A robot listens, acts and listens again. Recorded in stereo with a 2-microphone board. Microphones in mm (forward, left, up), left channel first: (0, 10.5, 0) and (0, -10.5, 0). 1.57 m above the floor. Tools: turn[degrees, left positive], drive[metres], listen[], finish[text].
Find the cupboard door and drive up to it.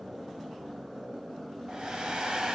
Action: listen[]
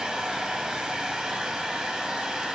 Action: listen[]
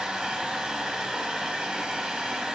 Action: finish[I can't make out a cupboard door to turn to.]